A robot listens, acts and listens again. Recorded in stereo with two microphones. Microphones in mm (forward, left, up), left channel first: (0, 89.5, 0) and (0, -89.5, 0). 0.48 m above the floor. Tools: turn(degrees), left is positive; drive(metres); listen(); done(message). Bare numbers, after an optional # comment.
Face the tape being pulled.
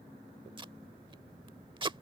# The tape being pulled: about 30° right or 150° right.
turn(-30)
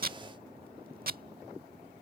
# So it is at 120° right.
turn(-120)
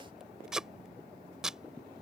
done("Facing the tape being pulled.")